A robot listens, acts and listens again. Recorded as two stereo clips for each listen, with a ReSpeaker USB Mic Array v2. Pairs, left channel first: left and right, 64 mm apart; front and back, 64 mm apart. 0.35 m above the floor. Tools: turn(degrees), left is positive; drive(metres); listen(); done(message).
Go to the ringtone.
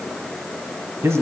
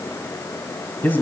listen()
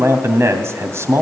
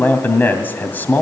listen()
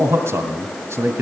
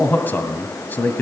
done("I can't make out a ringtone to turn to.")